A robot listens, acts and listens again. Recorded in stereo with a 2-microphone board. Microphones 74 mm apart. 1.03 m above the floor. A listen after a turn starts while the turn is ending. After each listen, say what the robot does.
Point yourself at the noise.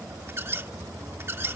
Turn 35° right.
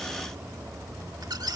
Turn 110° right.
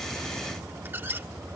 Turn 30° right.
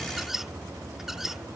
Found it: a squeak, straight ahead.